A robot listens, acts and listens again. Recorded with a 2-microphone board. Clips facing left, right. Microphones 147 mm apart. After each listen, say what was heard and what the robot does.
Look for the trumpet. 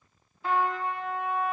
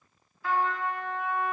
The trumpet: about 25° left or 155° left. Turn 25° left.
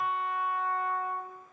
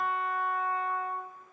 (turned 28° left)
Found it: a trumpet, straight ahead, 1 to 2 m away.